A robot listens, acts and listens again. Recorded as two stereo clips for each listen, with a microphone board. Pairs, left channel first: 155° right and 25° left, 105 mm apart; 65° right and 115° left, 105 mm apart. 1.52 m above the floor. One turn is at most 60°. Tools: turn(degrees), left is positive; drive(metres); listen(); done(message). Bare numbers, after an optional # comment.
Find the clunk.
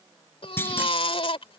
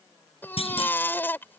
# The clunk: 90° right.
turn(-60)
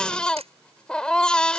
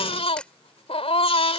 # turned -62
# Nothing new. It was at 25° right.
turn(-25)
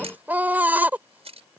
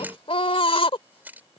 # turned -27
done("I heard a clunk from this way, but can't make it out now.")